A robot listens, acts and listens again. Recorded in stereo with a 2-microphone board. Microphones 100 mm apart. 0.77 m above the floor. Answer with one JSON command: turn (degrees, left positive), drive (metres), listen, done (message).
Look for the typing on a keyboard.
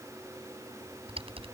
{"turn": -70}
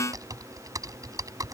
{"turn": -35}
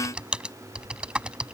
{"turn": -10}
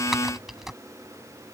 {"done": "Facing the typing on a keyboard."}